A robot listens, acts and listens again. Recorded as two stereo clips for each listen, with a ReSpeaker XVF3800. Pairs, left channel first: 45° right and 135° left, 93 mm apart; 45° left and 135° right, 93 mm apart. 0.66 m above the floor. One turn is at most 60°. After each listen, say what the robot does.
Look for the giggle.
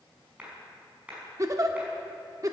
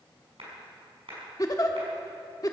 Turn 60° left.
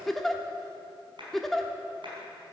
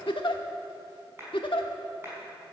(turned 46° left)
Turn 40° left.
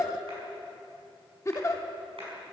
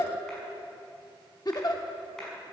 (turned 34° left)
Facing the giggle, 1 to 2 m away.